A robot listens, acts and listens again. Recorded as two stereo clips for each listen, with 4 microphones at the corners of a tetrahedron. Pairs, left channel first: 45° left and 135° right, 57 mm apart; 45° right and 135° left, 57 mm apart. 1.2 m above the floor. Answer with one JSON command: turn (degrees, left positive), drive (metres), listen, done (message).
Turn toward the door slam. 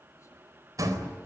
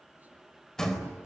{"turn": -125}
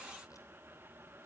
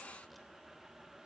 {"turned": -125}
{"done": "Facing where the door slam came from. I can't hear it now."}